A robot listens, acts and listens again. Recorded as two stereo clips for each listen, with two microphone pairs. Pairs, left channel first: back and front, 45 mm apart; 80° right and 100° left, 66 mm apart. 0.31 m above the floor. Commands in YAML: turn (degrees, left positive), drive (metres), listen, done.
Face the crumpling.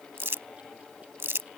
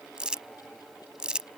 turn: 25
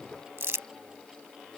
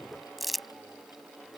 turn: 10
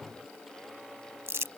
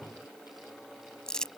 done: "Facing the crumpling."